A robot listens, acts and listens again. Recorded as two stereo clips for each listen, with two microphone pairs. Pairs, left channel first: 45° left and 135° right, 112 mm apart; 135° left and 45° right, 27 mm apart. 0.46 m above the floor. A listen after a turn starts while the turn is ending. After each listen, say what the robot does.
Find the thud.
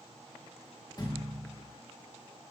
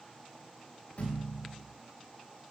Turn 100° left.
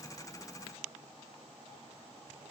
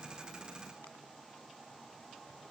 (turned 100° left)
Facing where the thud came from. I can't hear it now.